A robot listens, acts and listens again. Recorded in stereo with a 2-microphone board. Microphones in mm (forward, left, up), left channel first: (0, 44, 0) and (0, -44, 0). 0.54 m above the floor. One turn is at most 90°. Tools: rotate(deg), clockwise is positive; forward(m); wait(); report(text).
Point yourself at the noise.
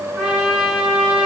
rotate(30)
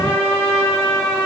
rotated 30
rotate(-20)
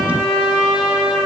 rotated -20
report("Found it: a trumpet, straight ahead.")